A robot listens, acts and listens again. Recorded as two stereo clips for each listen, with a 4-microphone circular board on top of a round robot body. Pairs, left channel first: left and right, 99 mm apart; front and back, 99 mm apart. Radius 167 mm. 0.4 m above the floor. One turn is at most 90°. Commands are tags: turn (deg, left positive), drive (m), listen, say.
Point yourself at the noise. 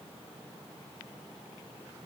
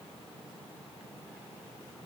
<listen/>
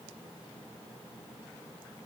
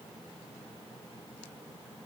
<listen/>
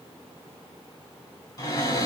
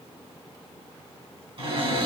<turn deg="90"/>
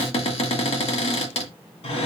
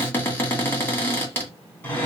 <turn deg="70"/>
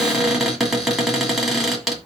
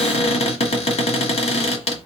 <say>Found it: a cupboard door, straight ahead.</say>